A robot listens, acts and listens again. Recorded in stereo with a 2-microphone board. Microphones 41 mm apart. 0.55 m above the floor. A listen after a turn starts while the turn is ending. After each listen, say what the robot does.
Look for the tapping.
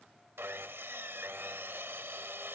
Keep listening.
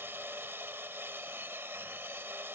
Keep listening.
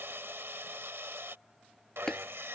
Turn 15° left.
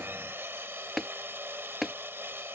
Facing the tapping.